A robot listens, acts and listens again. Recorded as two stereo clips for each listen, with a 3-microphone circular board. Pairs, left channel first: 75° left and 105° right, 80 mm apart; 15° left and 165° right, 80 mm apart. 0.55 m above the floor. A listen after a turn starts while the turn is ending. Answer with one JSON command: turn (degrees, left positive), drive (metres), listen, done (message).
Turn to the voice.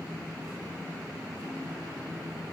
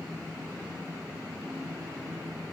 {"listen": true}
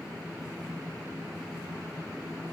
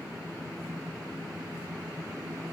{"listen": true}
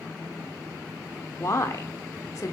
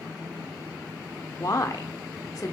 {"turn": 40}
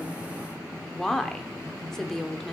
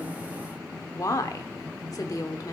{"turn": -10}
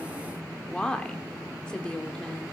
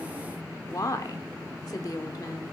{"done": "Found it: a woman speaking, straight ahead, 1 to 2 m away."}